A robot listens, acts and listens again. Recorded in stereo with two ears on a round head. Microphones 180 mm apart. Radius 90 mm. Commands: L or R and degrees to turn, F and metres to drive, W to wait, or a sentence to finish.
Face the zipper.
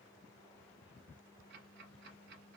W
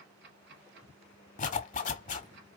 L35
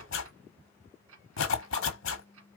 L105
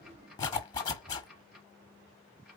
L20
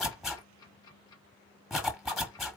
Found it: a zipper, straight ahead.